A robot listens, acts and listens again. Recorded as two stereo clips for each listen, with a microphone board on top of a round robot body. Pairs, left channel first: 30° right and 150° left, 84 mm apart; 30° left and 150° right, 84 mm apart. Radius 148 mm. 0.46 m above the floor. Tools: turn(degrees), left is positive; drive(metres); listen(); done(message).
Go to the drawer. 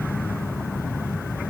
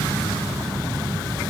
listen()
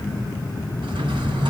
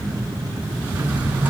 turn(degrees=140)
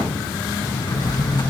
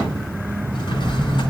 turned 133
turn(degrees=10)
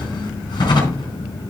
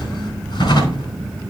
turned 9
drive(metres=1.0)
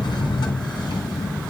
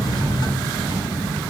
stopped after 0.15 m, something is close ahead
done("Something is in my way. I am facing the drawer but have not reached it.")